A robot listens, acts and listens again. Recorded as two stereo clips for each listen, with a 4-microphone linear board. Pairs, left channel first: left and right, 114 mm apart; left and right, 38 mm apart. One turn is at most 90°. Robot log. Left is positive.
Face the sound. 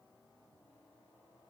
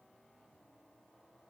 cmd idle
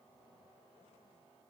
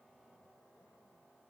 cmd idle
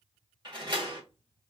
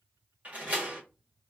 note: The door slam: about 40° right or 140° right.
cmd yaw -40
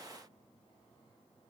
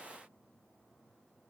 cmd idle
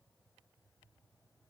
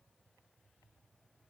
end: I heard a door slam, but can't make it out now. It was about straight ahead or 100° right.